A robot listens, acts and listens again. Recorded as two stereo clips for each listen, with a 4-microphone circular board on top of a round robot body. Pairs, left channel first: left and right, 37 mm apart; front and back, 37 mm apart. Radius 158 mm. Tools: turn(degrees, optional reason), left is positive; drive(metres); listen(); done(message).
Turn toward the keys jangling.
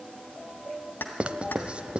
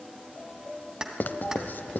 turn(degrees=110, reason="The keys jangling: 110° left.")
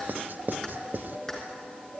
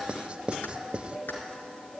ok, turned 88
turn(degrees=25, reason="Nothing new. It was at 25° left.")
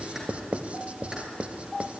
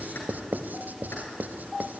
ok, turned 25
listen()
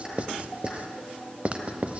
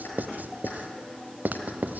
done("Facing where the keys jangling came from. I can't hear it now.")